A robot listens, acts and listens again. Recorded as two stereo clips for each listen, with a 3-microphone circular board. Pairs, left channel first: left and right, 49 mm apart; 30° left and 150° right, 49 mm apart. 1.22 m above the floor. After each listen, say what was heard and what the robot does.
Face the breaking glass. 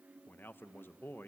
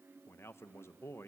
Keep listening.
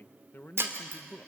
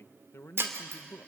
The breaking glass: 120° right. Turn 120° right.
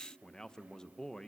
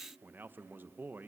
Facing where the breaking glass came from. I can't hear it now.